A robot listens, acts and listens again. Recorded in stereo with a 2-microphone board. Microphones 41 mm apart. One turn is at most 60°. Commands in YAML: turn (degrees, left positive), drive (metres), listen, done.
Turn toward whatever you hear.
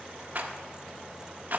turn: -50
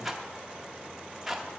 turn: -10
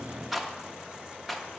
done: "Facing the rattle, under 1 m away."